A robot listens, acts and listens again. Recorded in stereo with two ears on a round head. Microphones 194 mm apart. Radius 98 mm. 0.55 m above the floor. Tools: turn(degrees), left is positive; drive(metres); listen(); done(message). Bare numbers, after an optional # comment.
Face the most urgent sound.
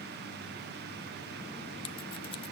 listen()
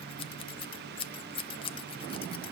listen()
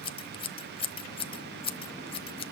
done("I can't make out anything urgent, only scissors.")